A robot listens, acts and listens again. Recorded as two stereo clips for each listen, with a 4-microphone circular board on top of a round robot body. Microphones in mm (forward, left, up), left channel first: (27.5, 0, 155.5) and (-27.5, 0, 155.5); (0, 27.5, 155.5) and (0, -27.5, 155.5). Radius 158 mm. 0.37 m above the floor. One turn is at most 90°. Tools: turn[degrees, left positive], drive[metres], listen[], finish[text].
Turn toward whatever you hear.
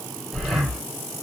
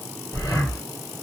Thought: The breathing: 85° left.
Action: turn[85]
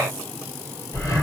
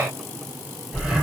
Action: finish[Facing the breathing.]